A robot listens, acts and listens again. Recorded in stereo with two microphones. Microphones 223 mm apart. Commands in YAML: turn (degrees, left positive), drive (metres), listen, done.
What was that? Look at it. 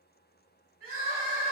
turn: -90
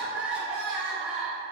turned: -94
done: "Found it: crying, straight ahead, under 1 m away."